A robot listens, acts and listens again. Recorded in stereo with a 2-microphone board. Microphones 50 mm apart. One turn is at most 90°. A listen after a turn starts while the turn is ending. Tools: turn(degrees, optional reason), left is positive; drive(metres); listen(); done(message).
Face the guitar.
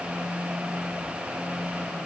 listen()
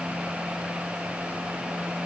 listen()
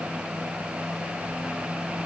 done("I can't make out a guitar to turn to.")